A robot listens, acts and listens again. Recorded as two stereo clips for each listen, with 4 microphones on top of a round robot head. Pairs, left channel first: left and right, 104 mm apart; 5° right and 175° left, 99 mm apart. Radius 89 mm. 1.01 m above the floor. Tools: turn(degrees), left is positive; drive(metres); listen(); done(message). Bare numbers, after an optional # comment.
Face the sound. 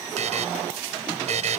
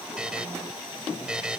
# The buzzer: 100° right.
turn(-100)
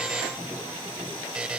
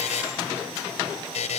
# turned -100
done("Found it: a buzzer, straight ahead.")